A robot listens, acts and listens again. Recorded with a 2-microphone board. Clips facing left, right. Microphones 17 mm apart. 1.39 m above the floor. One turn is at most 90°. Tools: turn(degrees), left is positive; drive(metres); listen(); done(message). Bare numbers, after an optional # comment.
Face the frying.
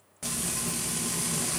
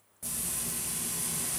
# The frying: about 45° left or 135° left.
turn(45)
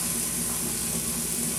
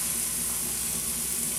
done("Facing the frying, 1 to 2 m away.")